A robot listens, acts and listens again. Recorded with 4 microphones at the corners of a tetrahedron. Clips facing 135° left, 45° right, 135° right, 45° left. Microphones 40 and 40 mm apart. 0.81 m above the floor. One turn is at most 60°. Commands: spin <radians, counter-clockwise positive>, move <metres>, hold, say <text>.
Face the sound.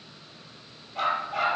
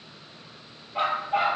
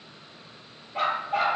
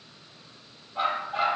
spin -1.05
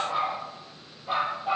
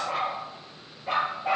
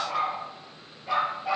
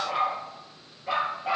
spin -0.61
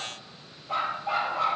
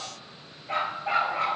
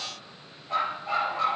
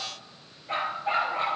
spin -0.17
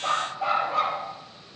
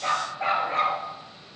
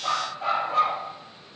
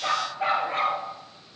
say Found it: a dog barking, straight ahead, over 4 m away.